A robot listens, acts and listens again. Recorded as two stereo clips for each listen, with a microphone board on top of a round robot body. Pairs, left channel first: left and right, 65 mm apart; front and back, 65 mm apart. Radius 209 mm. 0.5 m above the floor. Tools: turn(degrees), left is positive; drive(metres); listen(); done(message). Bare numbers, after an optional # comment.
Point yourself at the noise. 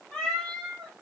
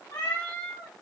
# The cat meowing: 10° left.
turn(10)
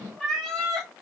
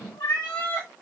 done("Found it: a cat meowing, straight ahead.")